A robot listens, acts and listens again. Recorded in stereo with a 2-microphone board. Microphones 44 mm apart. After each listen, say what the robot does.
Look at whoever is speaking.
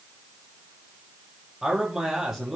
Turn 30° right.
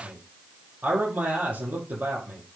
Turn 135° right.
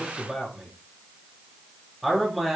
Found it: a man speaking, straight ahead.